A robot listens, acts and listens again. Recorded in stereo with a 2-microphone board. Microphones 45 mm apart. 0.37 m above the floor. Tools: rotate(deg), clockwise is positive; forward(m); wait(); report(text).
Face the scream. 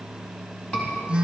rotate(-30)
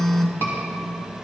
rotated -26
rotate(-120)
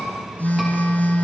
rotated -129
rotate(10)
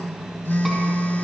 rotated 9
wait()
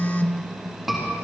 report("Facing the scream.")